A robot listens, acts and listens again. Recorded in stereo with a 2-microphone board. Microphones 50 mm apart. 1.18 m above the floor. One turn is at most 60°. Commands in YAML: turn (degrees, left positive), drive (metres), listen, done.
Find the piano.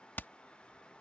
listen: true
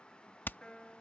turn: 15
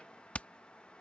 listen: true
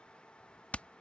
listen: true
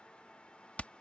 done: "I heard a piano, but can't make it out now. It was about straight ahead or 150° left."